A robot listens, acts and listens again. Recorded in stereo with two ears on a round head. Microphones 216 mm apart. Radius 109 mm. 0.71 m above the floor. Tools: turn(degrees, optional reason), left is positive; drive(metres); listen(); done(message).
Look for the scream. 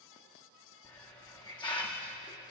listen()
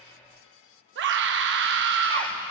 turn(degrees=-50, reason="The scream: about 50° right or 130° right.")
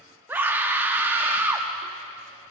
turn(degrees=-10, reason="So it is at 10° right.")
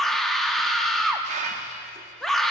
done("Facing the scream, under 1 m away.")